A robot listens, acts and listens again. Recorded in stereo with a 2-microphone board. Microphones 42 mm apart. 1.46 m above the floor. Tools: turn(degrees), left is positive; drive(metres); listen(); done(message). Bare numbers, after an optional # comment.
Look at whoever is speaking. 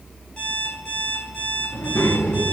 # The child speaking: about 70° left or 110° left.
turn(70)
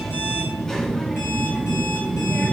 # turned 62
# So it is at 10° left.
turn(10)
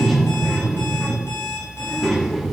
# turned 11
done("Facing the child speaking, 2 to 4 m away.")